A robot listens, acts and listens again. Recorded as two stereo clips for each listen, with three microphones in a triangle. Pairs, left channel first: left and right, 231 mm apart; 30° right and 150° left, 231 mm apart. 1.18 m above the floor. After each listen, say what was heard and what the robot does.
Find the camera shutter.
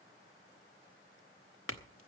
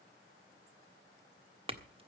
Keep listening.
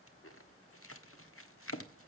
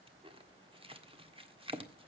Keep listening.
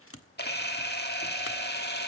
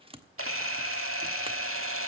The camera shutter: 130° left. Turn 130° left.
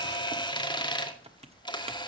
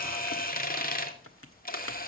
The camera shutter is now 20° left. Turn 20° left.
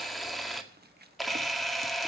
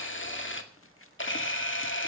Facing the camera shutter, 2 to 4 m away.